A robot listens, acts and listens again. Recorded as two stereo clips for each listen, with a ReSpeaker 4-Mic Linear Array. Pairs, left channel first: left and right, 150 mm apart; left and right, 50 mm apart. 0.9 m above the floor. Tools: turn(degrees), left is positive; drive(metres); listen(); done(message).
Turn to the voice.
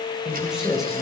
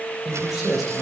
turn(degrees=30)
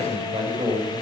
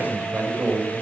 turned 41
turn(degrees=-35)
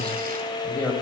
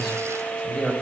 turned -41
turn(degrees=10)
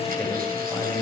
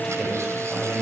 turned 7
done("Found it: a man speaking, straight ahead.")